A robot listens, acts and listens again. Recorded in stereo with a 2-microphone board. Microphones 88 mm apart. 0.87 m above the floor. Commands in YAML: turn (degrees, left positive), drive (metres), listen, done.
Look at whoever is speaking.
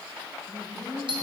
turn: 30
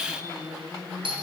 done: "Facing the woman speaking."